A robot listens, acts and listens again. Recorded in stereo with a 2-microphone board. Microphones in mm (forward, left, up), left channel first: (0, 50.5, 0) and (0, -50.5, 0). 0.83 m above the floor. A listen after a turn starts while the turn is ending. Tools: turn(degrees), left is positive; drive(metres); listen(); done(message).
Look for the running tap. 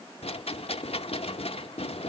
listen()
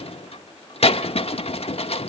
listen()
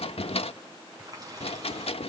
turn(degrees=-40)
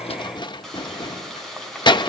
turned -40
done("Found it: a running tap, straight ahead, over 4 m away.")